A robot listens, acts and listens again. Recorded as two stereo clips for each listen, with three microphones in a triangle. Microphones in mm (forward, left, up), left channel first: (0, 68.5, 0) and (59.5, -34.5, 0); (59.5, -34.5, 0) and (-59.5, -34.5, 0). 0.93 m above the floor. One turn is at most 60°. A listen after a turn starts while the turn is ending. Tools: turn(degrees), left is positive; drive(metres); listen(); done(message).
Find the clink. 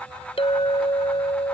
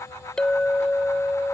turn(degrees=60)
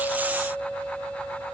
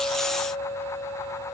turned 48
turn(degrees=35)
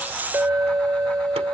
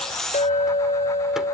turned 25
turn(degrees=15)
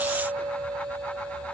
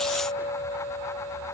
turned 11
done("Found it: a clink, straight ahead.")